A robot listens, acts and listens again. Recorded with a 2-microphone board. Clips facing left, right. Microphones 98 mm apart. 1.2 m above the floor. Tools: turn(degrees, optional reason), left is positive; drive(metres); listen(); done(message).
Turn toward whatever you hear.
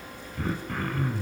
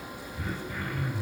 turn(degrees=60, reason="The throat clearing: about 60° left or 120° left.")
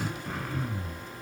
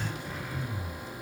turn(degrees=60, reason="So it is at 60° left.")
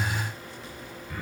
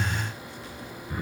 turn(degrees=-25, reason="The throat clearing is now 25° right.")
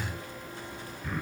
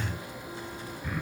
done("Found it: throat clearing, straight ahead.")